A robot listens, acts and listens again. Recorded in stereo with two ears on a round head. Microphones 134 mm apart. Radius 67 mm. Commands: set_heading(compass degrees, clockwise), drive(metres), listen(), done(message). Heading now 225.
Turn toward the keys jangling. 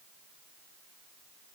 listen()
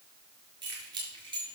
set_heading(260)
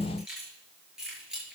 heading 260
done("Facing the keys jangling, over 4 m away.")